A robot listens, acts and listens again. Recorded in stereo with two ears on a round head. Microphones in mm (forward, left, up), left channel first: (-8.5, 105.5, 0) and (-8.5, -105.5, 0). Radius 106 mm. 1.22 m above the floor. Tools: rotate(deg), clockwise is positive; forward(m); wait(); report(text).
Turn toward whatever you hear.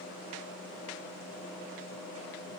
wait()
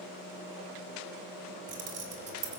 rotate(30)
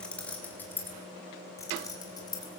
rotate(-15)
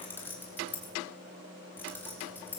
rotate(-10)
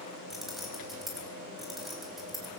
report("Found it: keys jangling, straight ahead.")